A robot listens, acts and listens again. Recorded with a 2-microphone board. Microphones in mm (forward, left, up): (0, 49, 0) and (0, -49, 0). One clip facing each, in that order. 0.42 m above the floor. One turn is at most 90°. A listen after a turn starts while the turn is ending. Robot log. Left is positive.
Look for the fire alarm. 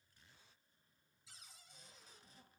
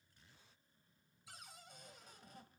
cmd idle
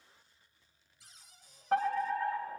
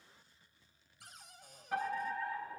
note: The fire alarm: about 55° left or 125° left.
cmd yaw +55
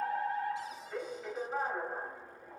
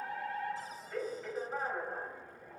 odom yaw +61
end: Found it: a fire alarm, straight ahead.